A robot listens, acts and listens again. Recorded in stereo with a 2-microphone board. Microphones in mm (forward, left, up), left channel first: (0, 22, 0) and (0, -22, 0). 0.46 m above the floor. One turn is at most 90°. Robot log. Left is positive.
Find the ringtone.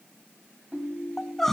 note: The ringtone: about 40° right or 140° right.
cmd yaw -40
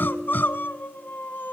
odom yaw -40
note: So it is at 95° right.
cmd yaw -90
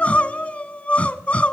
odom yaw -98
cmd idle
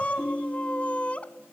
end: Found it: a ringtone, straight ahead.